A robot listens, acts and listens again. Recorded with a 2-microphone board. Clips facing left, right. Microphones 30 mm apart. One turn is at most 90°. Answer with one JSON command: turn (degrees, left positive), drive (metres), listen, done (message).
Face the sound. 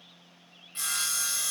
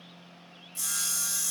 {"turn": 45}
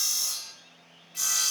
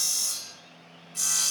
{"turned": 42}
{"turn": 10}
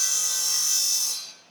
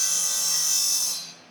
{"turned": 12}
{"done": "Found it: sawing, straight ahead."}